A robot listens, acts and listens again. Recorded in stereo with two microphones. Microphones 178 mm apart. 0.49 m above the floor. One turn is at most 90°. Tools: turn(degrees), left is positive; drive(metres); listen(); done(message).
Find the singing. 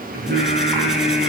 turn(degrees=-65)
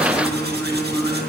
done("Facing the singing, over 4 m away.")